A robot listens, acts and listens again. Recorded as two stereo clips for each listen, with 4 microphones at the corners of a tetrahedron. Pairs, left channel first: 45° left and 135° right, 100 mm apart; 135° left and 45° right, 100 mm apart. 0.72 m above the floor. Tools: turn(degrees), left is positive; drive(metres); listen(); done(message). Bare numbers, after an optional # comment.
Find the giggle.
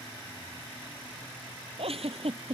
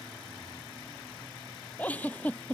# The giggle: 150° right.
turn(-150)
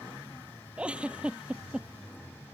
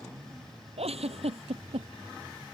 # The giggle is now 55° right.
turn(-55)
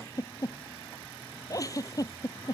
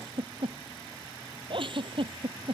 # The giggle is now 10° right.
turn(-10)
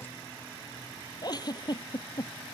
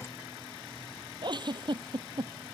done("Facing the giggle.")